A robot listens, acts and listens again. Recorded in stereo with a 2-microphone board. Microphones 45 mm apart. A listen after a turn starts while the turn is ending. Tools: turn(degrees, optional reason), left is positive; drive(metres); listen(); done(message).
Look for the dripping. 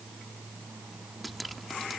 turn(degrees=30)
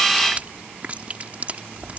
turn(degrees=-35, reason="So it is at 35° right.")
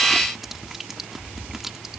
done("Found it: dripping, straight ahead.")